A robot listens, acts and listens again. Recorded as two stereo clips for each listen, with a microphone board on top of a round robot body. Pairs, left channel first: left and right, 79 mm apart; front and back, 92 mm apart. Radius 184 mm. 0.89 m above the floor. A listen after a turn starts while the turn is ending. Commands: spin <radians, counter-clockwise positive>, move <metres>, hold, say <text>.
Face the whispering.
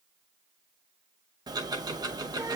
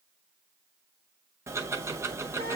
hold
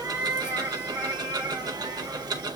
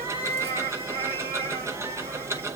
hold
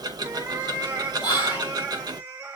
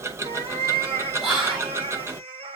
spin 1.48
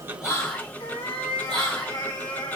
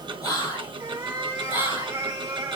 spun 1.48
say Found it: whispering, straight ahead.